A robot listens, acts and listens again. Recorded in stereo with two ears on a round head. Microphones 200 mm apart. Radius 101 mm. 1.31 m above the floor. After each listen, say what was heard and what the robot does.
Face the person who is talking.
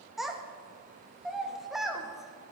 Turn 30° left.
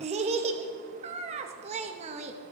So it is at 30° right. Turn 30° right.
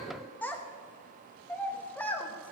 The child speaking is now 10° left. Turn 10° left.
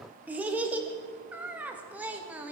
The child speaking is now 10° right. Turn 10° right.
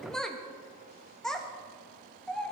Found it: a child speaking, straight ahead.